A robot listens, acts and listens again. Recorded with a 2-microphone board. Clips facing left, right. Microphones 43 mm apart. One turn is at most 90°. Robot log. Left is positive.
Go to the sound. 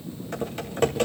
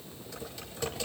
note: The typing on a keyboard: about 50° left or 130° left.
cmd yaw +50
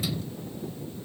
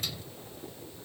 cmd idle
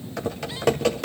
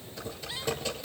note: So it is at 80° left.
cmd yaw +80
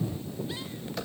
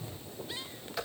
cmd fwd 1.0
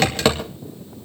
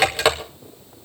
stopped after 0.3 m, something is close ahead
note: The typing on a keyboard is now 10° right.
cmd yaw -10
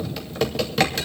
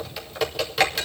end: Something is in my way. I am facing the typing on a keyboard but have not reached it.